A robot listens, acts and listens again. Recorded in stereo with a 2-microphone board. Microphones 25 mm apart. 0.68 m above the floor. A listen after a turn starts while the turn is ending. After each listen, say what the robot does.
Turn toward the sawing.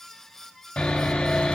Turn 65° left.
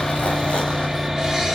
Facing the sawing.